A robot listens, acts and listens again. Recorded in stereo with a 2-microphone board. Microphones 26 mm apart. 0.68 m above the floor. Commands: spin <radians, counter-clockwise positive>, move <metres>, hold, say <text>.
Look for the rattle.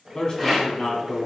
spin 0.52
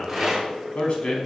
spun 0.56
spin -0.44
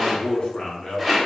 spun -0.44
say Found it: a rattle, straight ahead.